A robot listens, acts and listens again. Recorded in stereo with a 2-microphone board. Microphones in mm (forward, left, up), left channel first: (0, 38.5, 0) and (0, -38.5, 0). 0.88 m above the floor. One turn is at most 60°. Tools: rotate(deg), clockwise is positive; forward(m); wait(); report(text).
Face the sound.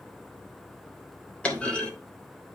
rotate(-30)
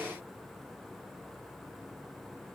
wait()
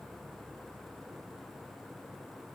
report("I heard a clunk, but can't make it out now. It was about 15° right or 135° left.")